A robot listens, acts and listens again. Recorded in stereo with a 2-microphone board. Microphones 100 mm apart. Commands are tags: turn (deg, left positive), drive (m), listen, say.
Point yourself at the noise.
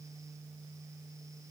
<listen/>
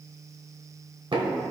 <turn deg="-60"/>
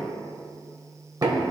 <turn deg="-45"/>
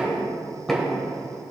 <say>Found it: knocking, straight ahead, 1 to 2 m away.</say>